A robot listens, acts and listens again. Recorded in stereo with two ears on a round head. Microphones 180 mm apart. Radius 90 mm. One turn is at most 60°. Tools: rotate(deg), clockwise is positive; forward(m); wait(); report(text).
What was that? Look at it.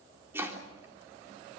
rotate(30)
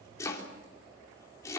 rotate(-15)
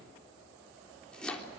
report("Found it: chopping, straight ahead.")